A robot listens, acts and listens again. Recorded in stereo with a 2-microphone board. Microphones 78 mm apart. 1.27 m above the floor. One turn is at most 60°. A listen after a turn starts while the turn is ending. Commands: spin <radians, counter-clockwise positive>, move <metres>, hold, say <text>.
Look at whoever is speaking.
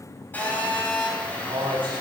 spin -1.05
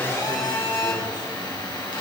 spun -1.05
spin -0.52
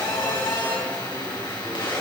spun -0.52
hold
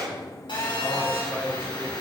spin -0.17
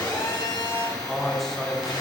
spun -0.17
say Found it: a man speaking, straight ahead, over 4 m away.